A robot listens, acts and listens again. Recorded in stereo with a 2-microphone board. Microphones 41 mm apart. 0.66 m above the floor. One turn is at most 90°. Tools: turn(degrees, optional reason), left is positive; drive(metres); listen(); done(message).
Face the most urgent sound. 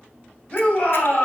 turn(degrees=25, reason="The shout: about 25° left or 155° left.")
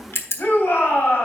turn(degrees=90, reason="So it is at 130° left.")
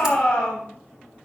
turn(degrees=20, reason="The shout is now 20° left.")
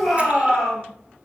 done("Facing the shout.")